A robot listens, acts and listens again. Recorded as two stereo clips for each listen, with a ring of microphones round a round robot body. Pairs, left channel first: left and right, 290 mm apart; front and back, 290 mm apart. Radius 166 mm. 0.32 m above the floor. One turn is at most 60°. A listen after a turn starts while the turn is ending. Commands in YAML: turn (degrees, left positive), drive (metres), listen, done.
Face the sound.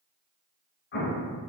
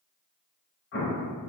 turn: 40
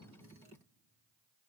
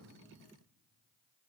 done: "I heard an explosion from this way, but can't make it out now."